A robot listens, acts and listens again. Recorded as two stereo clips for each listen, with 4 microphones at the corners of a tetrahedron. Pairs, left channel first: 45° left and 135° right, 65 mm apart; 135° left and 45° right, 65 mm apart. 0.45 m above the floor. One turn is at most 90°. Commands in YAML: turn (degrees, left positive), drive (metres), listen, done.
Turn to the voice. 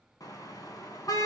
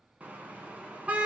listen: true
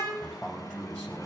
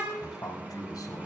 turn: 90
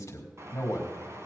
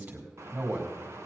done: "Found it: a man speaking, straight ahead."